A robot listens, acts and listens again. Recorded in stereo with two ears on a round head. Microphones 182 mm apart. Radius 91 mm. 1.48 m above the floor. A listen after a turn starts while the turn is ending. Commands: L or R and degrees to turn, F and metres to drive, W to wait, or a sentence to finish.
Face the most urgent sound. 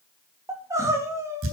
R30
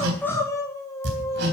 L15
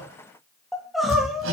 Found it: crying, straight ahead, 2 to 4 m away.